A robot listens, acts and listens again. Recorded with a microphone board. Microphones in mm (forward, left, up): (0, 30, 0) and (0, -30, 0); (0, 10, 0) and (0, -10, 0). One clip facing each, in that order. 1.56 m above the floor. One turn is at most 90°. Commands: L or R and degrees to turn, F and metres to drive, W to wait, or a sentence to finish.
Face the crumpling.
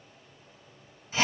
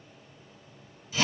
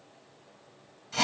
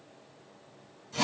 W
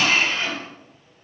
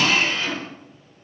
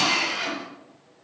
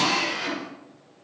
W
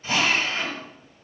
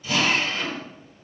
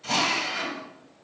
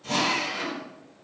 I can't make out crumpling to turn to.